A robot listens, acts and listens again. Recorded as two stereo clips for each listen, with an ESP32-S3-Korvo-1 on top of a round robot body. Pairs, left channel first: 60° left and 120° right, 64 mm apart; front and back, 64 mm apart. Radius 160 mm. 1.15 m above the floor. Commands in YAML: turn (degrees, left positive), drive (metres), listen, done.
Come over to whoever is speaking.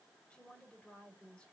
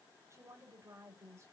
turn: 135
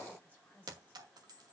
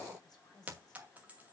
drive: 1.0
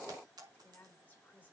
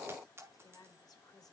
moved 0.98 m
drive: 1.0
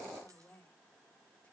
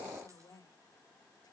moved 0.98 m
drive: 1.0
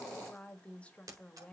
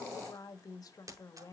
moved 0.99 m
turn: -10
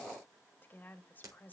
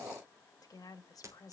drive: 1.0
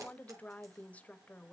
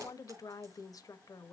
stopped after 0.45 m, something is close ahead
done: "Arrived at the woman speaking, straight ahead."